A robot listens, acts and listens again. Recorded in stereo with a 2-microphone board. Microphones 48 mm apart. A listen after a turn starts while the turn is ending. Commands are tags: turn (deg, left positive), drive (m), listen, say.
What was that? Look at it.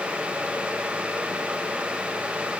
<listen/>
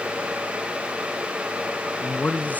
<turn deg="35"/>
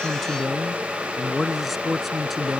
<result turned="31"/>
<say>Found it: a man speaking, straight ahead.</say>